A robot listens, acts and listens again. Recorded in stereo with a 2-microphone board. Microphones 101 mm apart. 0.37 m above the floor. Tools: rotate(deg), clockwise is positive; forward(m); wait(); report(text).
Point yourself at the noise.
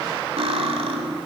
rotate(70)
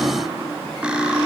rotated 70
rotate(10)
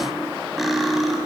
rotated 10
report("Facing the cutlery clinking, 1 to 2 m away.")